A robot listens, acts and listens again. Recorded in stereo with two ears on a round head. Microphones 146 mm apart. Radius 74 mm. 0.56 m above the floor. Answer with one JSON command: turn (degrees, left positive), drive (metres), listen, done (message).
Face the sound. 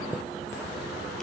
{"turn": 30}
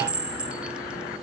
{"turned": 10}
{"turn": -30}
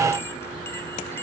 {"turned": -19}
{"listen": true}
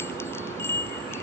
{"turn": 15}
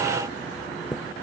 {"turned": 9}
{"done": "Facing the chime."}